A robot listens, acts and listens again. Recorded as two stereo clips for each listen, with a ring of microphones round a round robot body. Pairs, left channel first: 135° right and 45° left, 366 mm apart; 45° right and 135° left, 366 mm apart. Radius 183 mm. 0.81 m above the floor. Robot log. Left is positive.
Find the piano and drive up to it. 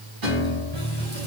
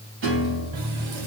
note: The piano: 80° left.
cmd yaw +80
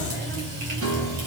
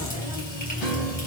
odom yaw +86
note: The piano is now 10° right.
cmd yaw -10
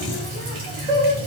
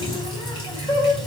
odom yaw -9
cmd idle
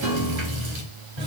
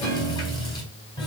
cmd fwd 1.0
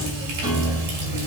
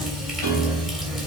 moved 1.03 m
cmd fwd 1.0
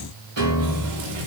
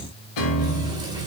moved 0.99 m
cmd fwd 1.0
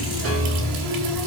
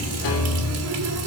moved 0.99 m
note: The piano is now 10° right.
cmd yaw -10
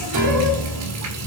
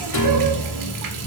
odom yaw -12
cmd fwd 1.0
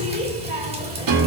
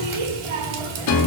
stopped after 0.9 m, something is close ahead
end: Arrived at the piano, straight ahead.